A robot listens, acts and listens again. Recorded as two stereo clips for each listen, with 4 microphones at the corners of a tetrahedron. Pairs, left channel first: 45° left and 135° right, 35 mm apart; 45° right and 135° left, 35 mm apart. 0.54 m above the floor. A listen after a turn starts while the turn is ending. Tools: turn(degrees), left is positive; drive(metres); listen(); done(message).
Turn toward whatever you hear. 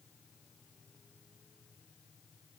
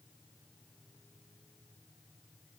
listen()
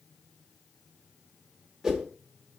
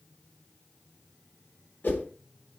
turn(degrees=-55)
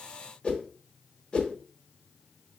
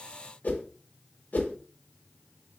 turn(degrees=-15)
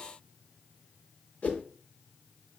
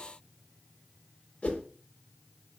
done("Facing the whoosh, under 1 m away.")